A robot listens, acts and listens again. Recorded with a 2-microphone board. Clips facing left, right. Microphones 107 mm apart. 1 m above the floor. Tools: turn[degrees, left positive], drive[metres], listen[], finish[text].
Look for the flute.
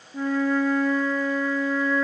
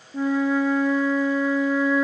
Action: turn[-30]
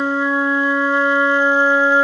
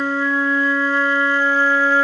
Thought: So it is at 20° left.
Action: turn[20]
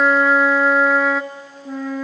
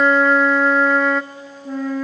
Action: finish[Facing the flute, under 1 m away.]